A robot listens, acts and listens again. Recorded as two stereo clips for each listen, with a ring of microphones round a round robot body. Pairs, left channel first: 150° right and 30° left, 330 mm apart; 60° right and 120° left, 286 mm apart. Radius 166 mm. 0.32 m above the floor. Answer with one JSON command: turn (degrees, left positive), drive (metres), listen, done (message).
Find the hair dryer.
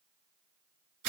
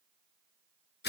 {"listen": true}
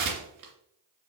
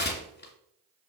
{"listen": true}
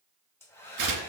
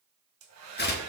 {"turn": 130}
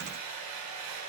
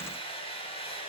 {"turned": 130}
{"turn": 10}
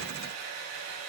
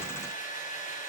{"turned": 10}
{"done": "Found it: a hair dryer, straight ahead, 2 to 4 m away."}